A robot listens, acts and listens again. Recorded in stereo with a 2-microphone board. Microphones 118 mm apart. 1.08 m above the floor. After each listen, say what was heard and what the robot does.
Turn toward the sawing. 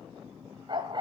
Keep listening.
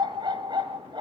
Keep listening.
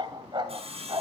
The sawing: about 55° right or 125° right. Turn 55° right.
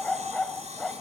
So it is at 70° right. Turn 70° right.
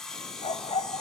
Found it: sawing, straight ahead.